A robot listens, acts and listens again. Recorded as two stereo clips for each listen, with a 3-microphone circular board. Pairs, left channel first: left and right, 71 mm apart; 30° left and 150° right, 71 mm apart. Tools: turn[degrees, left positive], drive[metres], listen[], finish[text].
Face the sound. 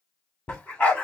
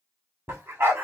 Thought: The dog barking: 165° left.
Action: turn[165]
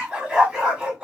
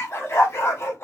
Thought: The dog barking is now 10° right.
Action: turn[-10]
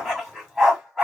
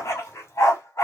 Action: finish[Facing the dog barking.]